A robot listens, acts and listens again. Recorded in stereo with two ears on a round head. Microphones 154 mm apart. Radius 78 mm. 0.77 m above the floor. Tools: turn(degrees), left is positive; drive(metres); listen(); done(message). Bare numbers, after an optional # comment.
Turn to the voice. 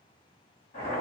listen()
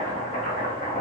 listen()
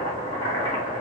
done("I can't make out anyone speaking to turn to.")